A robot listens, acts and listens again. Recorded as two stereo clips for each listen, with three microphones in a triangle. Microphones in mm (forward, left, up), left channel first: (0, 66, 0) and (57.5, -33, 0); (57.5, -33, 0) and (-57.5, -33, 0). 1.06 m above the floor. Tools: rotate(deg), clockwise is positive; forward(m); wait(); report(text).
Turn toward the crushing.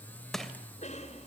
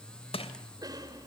rotate(-30)
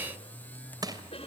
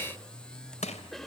report("Found it: crushing, straight ahead, 2 to 4 m away.")